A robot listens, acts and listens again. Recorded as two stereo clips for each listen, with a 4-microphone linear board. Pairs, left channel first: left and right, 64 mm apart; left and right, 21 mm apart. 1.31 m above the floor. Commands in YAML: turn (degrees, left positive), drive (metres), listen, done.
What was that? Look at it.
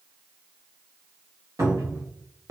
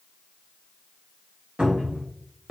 turn: -60
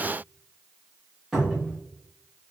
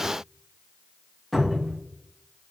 turn: -10
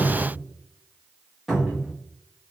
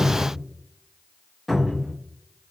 done: "Facing the cupboard door."